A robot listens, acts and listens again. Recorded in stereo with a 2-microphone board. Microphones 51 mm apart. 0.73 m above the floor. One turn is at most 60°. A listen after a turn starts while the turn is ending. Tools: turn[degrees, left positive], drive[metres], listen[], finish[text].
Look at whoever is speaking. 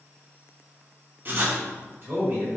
Thought: The man speaking: about 50° right or 130° right.
Action: turn[-50]
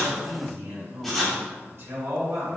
Thought: So it is at 70° right.
Action: turn[-60]
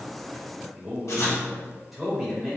Action: finish[Facing the man speaking.]